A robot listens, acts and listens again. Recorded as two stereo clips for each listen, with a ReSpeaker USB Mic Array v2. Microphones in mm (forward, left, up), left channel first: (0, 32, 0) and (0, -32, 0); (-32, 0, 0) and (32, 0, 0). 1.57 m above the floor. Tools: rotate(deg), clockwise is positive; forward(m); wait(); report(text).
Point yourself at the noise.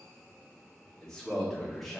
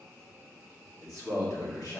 rotate(-180)
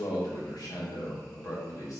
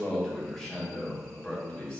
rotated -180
rotate(-110)
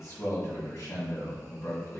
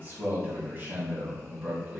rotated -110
rotate(-55)
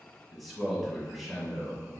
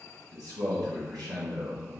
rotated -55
report("Found it: a man speaking, straight ahead, 1 to 2 m away.")